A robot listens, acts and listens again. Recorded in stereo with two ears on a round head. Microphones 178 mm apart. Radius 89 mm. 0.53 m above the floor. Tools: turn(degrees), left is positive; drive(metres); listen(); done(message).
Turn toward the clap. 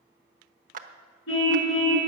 turn(degrees=-45)
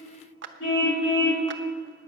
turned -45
turn(degrees=-85)
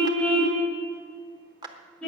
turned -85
turn(degrees=-25)
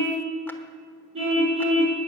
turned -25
listen()
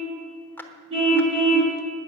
turn(degrees=10)
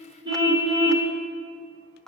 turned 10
done("Facing the clap, 1 to 2 m away.")